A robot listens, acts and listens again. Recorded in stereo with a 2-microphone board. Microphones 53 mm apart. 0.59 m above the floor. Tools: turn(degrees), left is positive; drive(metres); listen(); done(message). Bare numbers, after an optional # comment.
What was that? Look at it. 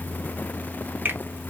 # The finger snap: about 35° right or 145° right.
turn(-35)
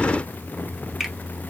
done("Found it: a finger snap, straight ahead, under 1 m away.")